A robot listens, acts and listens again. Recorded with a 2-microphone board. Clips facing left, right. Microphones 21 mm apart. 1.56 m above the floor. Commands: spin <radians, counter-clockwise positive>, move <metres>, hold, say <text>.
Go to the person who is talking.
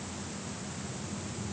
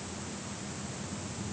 hold
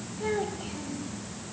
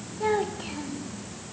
spin -0.70
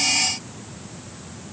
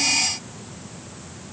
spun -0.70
hold
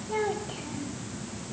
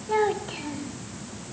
spin -1.66
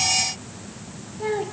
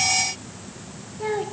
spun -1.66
move 1.0
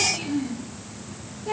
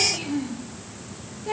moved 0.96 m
move 1.0
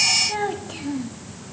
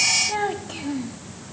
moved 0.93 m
spin -0.17
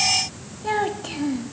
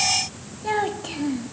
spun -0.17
move 1.0
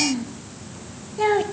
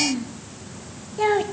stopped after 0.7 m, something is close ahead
say I am next to the child speaking.